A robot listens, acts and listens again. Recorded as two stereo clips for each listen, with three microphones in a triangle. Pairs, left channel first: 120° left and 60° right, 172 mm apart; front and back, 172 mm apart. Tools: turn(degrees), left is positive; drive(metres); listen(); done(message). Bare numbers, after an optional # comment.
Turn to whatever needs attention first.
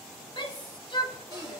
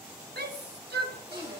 # The shout: straight behind.
turn(180)
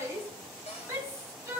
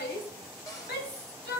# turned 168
# The shout is now 15° left.
turn(15)
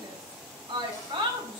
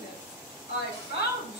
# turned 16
done("Facing the shout.")